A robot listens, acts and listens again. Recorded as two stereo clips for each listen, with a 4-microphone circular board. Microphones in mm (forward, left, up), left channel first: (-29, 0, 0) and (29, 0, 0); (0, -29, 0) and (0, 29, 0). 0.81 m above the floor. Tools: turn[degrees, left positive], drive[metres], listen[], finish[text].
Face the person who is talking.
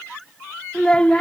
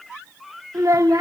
Thought: The child speaking: 105° left.
Action: turn[105]
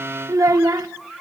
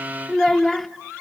Action: finish[Facing the child speaking.]